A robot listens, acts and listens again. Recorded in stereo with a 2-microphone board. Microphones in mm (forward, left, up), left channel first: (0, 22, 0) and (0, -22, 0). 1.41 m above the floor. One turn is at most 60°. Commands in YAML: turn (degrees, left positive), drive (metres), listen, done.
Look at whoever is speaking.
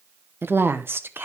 turn: -60
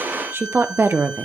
turn: -60
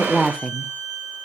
done: "Found it: a woman speaking, straight ahead, under 1 m away."